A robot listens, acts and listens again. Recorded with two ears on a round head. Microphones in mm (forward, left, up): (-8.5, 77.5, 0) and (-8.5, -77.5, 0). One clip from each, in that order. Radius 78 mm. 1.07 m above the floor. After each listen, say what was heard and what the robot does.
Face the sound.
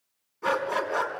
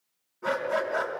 The dog barking: about 60° left or 120° left. Turn 60° left.
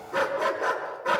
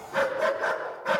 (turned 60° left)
Facing the dog barking, over 4 m away.